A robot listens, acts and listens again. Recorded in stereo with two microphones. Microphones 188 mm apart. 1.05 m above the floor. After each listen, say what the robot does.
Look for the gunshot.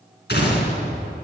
Turn 65° left.
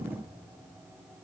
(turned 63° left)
Keep listening.
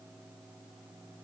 I heard a gunshot, but can't make it out now. It was about straight ahead or 55° left.